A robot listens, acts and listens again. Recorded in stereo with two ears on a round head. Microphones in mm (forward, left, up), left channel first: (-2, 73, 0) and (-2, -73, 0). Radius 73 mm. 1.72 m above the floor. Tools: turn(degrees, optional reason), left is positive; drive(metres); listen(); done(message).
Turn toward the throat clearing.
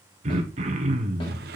turn(degrees=-45, reason="The throat clearing: about 45° right or 135° right.")
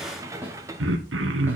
turn(degrees=-90, reason="So it is at 90° right.")
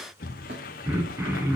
turn(degrees=-15, reason="The throat clearing is now 15° right.")
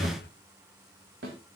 done("Facing the throat clearing.")